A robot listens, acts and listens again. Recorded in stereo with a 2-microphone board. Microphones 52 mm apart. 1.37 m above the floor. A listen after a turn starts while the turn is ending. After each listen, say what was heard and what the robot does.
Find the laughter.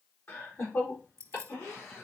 The laughter: about 55° left or 125° left. Turn 55° left.
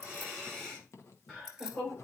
Found it: laughter, straight ahead.